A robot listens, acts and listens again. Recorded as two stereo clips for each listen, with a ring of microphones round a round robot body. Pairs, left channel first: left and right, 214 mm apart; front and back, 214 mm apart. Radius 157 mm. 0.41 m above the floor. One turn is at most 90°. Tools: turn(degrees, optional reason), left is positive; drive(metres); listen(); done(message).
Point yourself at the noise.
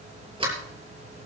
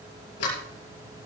turn(degrees=-25, reason="The sliding door: 25° right.")
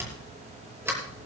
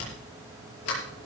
turn(degrees=-10, reason="The sliding door is now 10° right.")
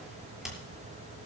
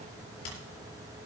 done("Found it: a sliding door, straight ahead, over 4 m away.")